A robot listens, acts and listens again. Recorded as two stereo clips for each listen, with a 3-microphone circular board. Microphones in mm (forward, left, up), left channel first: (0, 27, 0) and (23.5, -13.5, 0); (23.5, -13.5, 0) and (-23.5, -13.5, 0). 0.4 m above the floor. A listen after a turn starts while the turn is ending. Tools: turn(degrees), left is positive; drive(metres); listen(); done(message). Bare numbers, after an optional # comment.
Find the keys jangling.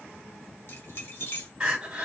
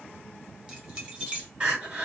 # The keys jangling: 120° left.
turn(120)
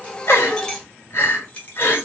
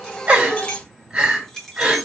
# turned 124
# The keys jangling is now 80° left.
turn(80)
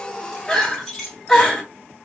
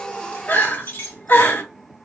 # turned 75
# The keys jangling is now 30° left.
turn(30)
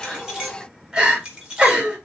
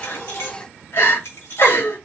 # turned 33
done("Found it: keys jangling, straight ahead.")